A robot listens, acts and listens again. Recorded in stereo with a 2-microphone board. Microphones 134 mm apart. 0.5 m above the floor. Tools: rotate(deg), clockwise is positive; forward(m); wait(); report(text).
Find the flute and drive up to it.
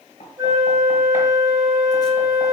rotate(25)
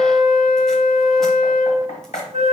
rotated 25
rotate(130)
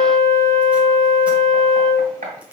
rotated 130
rotate(-45)
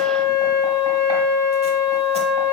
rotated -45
forward(1.0)
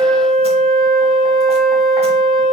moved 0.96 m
forward(1.0)
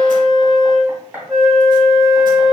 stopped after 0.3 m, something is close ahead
report("Arrived at the flute, straight ahead.")